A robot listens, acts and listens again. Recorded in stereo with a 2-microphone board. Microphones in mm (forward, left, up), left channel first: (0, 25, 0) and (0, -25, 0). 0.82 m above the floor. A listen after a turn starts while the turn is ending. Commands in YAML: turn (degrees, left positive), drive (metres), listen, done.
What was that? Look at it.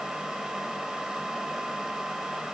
listen: true
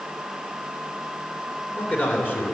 turn: 35
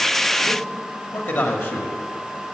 turn: 50
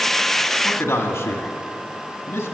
turn: 60
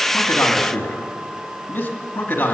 turn: 35
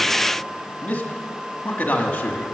turn: 30
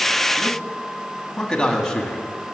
turn: 10
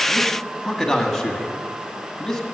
done: "Facing the man speaking."